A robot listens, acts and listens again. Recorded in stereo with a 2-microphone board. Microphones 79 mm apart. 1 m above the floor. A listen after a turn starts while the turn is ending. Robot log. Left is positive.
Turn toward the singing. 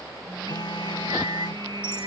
note: The singing: about 70° right or 110° right.
cmd yaw -70
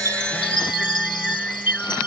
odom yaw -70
note: So it is at 10° left.
cmd yaw +10
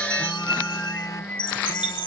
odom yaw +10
note: The singing is now 20° left.
cmd yaw +20
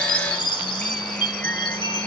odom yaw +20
cmd idle
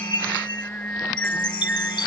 note: The singing is now 20° left.
cmd yaw +20
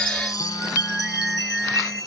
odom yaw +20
end: Facing the singing.